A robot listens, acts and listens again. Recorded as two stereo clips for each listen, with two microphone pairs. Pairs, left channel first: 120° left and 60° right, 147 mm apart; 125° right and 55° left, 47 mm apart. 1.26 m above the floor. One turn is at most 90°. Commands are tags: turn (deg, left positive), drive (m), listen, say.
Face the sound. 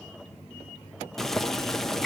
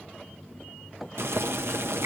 <turn deg="35"/>
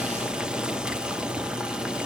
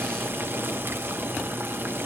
<turn deg="25"/>
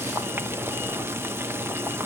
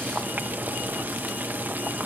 <turn deg="15"/>
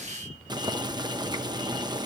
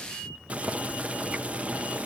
<say>Facing the boiling.</say>